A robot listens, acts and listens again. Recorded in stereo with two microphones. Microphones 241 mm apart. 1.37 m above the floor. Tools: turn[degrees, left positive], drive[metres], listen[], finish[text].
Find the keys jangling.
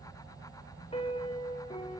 Action: listen[]
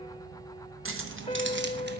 Thought: The keys jangling: about 60° right or 120° right.
Action: turn[-60]
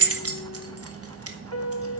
Thought: So it is at 75° right.
Action: turn[-75]
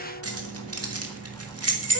Thought: The keys jangling is now 80° right.
Action: turn[-80]
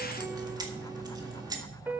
Thought: The keys jangling is now 15° right.
Action: turn[-15]
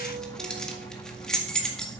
Action: finish[Found it: keys jangling, straight ahead.]